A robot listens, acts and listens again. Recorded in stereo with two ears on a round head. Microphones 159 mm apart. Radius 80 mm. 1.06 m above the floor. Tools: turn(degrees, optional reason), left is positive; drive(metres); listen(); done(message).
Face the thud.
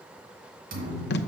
turn(degrees=-50, reason="The thud: about 50° right or 130° right.")
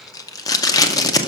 listen()
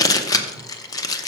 done("I heard a thud, but can't make it out now. It was about straight ahead or 80° right.")